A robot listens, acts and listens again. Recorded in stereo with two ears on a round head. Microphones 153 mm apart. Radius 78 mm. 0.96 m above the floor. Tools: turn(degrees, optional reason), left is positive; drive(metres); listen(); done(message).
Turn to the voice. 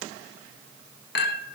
listen()
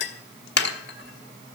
listen()
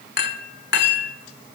done("I can't make out anyone speaking to turn to.")